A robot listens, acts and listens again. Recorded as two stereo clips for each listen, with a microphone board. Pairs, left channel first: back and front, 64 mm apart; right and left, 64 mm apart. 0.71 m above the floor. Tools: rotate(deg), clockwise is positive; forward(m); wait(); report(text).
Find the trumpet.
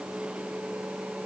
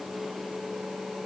wait()
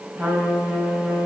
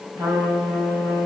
rotate(-65)
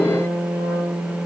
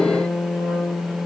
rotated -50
rotate(-15)
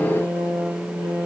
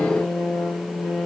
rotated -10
report("Facing the trumpet, 2 to 4 m away.")